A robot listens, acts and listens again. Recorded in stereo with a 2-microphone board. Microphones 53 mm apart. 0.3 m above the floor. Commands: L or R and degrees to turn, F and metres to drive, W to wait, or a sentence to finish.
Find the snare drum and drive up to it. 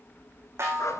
R55
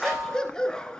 F1.0
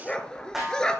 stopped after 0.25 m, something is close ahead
Blocked. The snare drum is further on, straight ahead.